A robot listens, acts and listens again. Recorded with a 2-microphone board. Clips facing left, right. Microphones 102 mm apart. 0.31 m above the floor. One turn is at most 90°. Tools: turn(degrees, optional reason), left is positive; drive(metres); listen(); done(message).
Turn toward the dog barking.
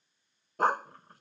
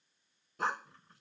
turn(degrees=55, reason="The dog barking: about 55° left or 125° left.")
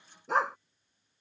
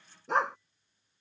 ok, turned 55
done("Found it: a dog barking, straight ahead.")